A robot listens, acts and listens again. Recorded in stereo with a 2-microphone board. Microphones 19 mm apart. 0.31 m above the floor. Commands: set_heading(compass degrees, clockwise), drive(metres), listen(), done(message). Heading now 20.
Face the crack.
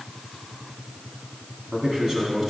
listen()
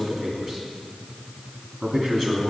listen()
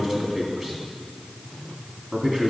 done("I can't make out a crack to turn to.")